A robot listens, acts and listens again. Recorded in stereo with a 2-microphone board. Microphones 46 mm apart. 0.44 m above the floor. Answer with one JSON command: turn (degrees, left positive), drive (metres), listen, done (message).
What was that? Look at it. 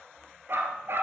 {"turn": -55}
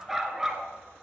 {"turn": -10}
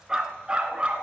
{"turn": -25}
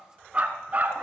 {"turn": -35}
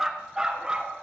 {"turn": -20}
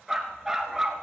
{"turn": -10}
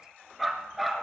{"done": "Found it: a dog barking, straight ahead, 1 to 2 m away."}